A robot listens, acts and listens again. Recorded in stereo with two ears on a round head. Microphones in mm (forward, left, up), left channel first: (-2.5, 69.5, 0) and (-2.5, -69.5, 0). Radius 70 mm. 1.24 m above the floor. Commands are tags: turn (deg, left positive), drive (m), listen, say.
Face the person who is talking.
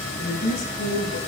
<turn deg="90"/>
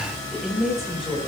<say>Found it: a woman speaking, straight ahead.</say>